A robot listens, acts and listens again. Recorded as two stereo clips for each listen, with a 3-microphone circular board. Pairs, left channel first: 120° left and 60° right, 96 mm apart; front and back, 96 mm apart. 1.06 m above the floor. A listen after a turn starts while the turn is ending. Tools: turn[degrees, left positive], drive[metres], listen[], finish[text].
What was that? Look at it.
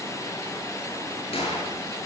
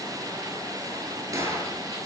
Thought: The gunshot: 125° left.
Action: turn[125]
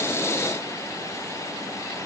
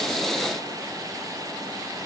Action: finish[Facing where the gunshot came from. I can't hear it now.]